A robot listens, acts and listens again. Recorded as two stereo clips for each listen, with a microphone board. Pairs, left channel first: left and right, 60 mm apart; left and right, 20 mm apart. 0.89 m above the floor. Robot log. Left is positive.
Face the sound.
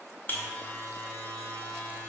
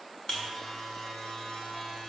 note: The buzzer: about 35° left or 145° left.
cmd yaw +35
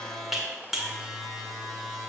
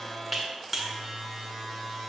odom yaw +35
end: Found it: a buzzer, straight ahead.